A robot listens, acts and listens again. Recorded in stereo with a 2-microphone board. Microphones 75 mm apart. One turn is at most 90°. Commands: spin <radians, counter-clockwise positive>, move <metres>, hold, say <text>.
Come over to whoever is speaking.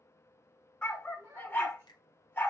spin -0.61
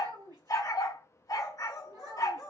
spin -1.57
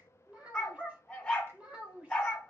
spin -0.26
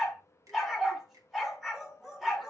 hold
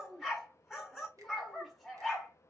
move 1.0
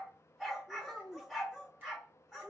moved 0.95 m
move 1.0
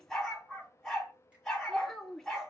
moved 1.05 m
spin 0.17
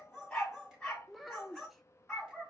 move 1.0
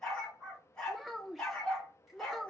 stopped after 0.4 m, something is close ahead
say Arrived at the child speaking, straight ahead.